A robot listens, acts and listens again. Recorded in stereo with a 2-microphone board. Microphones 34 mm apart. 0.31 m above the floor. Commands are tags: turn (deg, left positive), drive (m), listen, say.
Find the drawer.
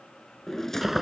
<turn deg="30"/>
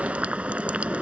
<listen/>
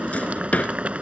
<turn deg="135"/>
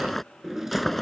<turn deg="-10"/>
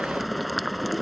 <listen/>
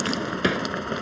<say>Found it: a drawer, straight ahead.</say>